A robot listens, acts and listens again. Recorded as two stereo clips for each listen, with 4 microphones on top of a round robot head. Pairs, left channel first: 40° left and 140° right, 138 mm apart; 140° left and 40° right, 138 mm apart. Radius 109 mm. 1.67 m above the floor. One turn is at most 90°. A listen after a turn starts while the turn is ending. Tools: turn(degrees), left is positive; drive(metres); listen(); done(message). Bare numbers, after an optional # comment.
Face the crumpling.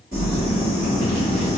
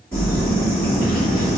# The crumpling: 140° right.
turn(-90)
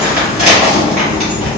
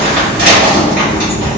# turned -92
# The crumpling is now 45° right.
turn(-45)
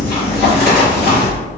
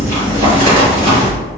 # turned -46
done("Facing the crumpling.")